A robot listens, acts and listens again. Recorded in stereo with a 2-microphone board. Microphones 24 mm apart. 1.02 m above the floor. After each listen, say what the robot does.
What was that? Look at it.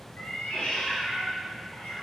Turn 90° left.
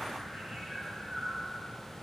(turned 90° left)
Turn 10° right.
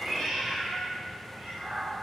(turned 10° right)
Turn 10° right.
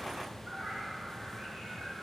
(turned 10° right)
Found it: a cat meowing, straight ahead, over 4 m away.